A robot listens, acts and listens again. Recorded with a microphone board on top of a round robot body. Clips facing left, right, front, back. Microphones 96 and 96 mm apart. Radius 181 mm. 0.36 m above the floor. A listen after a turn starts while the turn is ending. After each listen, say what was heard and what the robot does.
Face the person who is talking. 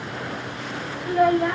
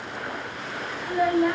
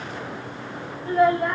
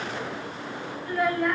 The child speaking: 60° left. Turn 60° left.
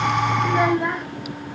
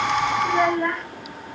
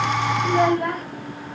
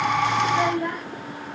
The child speaking is now 15° left. Turn 15° left.
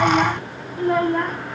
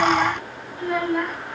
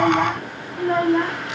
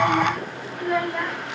The child speaking is now 50° left. Turn 50° left.
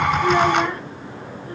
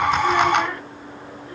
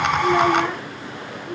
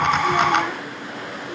The child speaking is now 35° left. Turn 35° left.
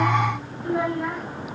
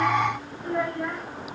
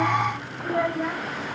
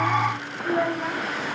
The child speaking is now 15° left. Turn 15° left.
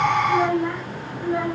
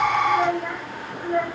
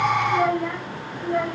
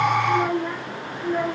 Facing the child speaking.